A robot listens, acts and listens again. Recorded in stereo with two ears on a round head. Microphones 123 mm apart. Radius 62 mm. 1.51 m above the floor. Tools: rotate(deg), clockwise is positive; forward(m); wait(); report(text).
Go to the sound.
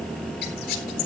rotate(-70)
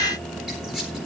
forward(1.0)
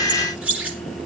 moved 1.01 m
rotate(10)
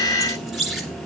forward(1.0)
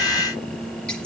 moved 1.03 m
wait()
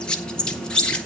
forward(1.0)
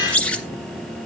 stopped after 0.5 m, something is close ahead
rotate(-10)
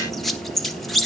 report("Arrived at the squeak, straight ahead.")